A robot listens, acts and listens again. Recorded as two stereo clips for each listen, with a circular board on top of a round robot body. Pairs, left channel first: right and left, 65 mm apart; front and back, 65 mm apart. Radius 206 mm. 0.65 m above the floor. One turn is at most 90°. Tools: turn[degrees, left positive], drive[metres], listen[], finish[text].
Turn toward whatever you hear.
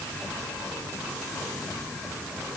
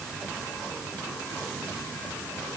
Action: listen[]
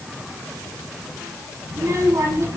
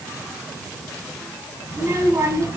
Thought: The child speaking: 140° left.
Action: turn[90]
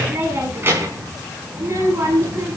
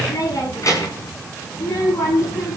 Thought: The child speaking is now 40° left.
Action: turn[40]
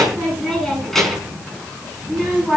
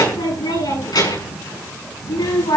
Action: finish[Facing the child speaking, over 4 m away.]